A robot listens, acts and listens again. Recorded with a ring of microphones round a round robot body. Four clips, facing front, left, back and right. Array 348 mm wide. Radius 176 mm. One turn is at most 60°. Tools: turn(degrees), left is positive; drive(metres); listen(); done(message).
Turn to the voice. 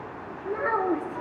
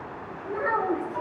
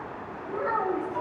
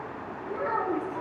turn(degrees=15)
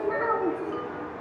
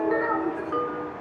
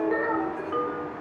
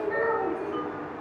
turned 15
turn(degrees=10)
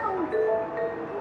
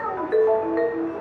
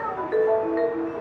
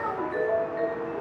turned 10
turn(degrees=15)
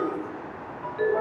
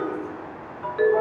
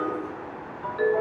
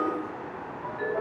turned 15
listen()
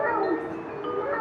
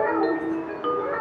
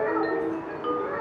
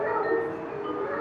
turn(degrees=40)
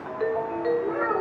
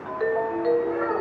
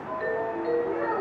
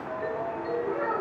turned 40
done("Found it: a child speaking, straight ahead.")